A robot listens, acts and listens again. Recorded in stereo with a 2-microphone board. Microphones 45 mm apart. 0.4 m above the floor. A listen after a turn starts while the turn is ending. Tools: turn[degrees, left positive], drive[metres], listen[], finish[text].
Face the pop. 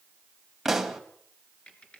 Action: turn[-30]
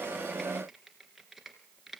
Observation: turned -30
Action: listen[]
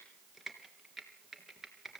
Action: finish[I heard a pop, but can't make it out now. It was about 25° left or 145° right.]